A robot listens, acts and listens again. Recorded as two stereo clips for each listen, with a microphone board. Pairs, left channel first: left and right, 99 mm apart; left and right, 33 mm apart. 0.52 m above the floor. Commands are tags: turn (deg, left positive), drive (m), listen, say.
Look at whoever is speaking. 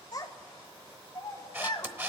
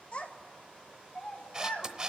<turn deg="40"/>
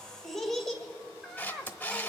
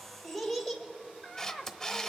<say>Facing the child speaking.</say>